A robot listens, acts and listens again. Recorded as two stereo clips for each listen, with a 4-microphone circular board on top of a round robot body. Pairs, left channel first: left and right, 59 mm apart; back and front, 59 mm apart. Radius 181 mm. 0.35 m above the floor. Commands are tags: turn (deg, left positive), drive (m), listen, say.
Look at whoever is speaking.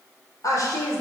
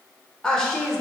<turn deg="95"/>
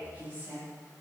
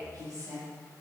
<turn deg="-30"/>
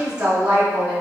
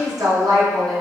<turn deg="-20"/>
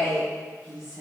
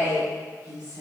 <turn deg="-10"/>
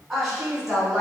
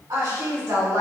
<say>Facing the woman speaking, over 4 m away.</say>